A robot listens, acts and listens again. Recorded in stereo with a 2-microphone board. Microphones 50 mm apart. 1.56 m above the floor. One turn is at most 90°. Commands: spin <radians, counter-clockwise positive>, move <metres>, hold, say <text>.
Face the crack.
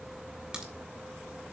spin -0.26
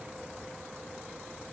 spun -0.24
hold
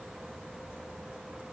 say I heard a crack, but can't make it out now. It was about 5° right or 150° right.